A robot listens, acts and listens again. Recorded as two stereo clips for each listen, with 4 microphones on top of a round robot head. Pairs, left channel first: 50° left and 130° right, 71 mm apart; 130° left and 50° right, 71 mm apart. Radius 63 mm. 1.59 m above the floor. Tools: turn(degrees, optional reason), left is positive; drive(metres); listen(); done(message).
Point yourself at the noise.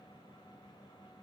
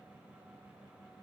listen()
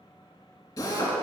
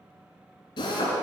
turn(degrees=95, reason="The drill: 95° left.")
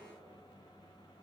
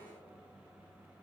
listen()
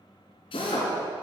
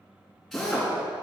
turn(degrees=40, reason="The drill is now 40° left.")
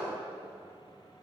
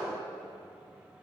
listen()
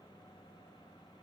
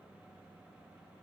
listen()
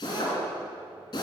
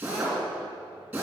turn(degrees=15, reason="The drill is now 15° left.")
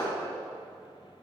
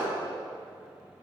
listen()
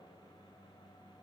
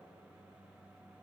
listen()
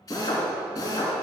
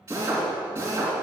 done("Found it: a drill, straight ahead.")